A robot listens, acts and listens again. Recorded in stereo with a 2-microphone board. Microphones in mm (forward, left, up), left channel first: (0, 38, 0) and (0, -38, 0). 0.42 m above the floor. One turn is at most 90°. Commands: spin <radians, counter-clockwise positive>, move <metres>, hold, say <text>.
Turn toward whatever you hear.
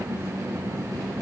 hold
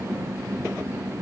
hold
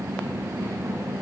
say I can't make out anything.